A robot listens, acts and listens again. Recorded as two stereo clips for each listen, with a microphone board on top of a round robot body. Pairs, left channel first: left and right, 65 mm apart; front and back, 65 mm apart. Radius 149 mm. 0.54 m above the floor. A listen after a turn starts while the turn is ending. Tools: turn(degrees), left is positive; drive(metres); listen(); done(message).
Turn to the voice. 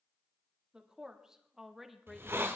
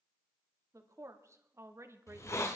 turn(degrees=180)
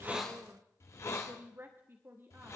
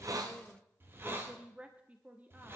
turn(degrees=-125)
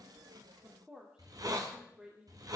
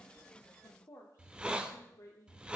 turn(degrees=-15)
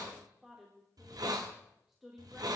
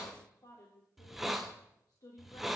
done("Facing the woman speaking, 2 to 4 m away.")